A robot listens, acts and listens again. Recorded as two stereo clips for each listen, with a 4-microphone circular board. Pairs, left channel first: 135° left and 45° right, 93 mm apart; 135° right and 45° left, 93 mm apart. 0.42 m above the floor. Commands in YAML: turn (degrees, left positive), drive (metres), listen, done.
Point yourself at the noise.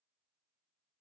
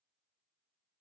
listen: true
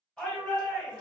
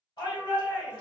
turn: -145
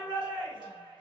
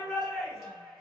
turn: -45
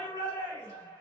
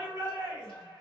done: "Found it: a shout, straight ahead, 1 to 2 m away."